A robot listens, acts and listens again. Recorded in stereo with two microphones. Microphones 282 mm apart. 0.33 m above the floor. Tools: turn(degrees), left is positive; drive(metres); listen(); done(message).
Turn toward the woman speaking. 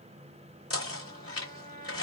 listen()
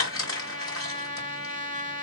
listen()
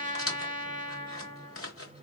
done("I can't make out a woman speaking to turn to.")